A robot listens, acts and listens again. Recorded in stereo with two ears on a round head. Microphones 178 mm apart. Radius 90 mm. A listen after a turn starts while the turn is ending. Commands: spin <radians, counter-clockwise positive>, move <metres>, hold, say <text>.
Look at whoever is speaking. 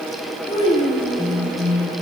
spin 0.44
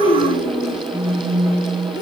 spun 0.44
spin 2.27
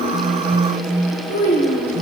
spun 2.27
spin 0.79
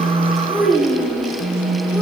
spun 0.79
say Facing the child speaking.